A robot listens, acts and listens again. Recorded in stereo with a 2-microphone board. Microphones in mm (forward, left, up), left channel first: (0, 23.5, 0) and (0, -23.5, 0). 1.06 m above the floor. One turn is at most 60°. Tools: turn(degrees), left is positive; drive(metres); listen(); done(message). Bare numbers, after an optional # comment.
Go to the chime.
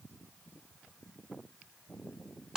listen()
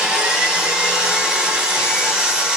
listen()
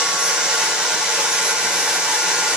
done("I can't make out a chime to turn to.")